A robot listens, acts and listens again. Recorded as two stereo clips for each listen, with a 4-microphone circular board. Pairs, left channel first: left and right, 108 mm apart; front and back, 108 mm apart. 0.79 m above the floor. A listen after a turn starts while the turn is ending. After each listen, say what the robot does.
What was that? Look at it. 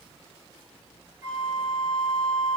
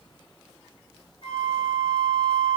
Turn 30° right.
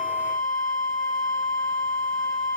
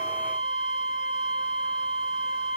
Found it: a flute, straight ahead.